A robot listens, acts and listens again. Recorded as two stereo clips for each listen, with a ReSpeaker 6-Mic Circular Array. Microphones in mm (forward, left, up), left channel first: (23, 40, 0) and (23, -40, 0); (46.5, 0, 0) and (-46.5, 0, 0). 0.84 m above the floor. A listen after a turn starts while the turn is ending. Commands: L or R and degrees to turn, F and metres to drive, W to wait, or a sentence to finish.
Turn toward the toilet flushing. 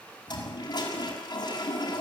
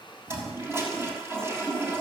L115
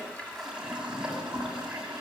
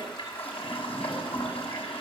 R10
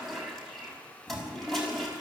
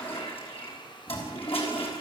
Found it: a toilet flushing, straight ahead, over 4 m away.